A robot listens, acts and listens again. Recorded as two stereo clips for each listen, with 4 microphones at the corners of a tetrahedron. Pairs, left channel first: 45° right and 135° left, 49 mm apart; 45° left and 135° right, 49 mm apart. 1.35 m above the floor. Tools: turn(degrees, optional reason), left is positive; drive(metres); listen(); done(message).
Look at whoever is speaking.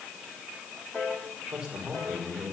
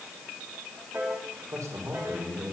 turn(degrees=-155, reason="The man speaking: 155° right.")
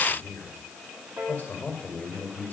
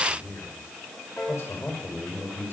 done("Facing the man speaking, over 4 m away.")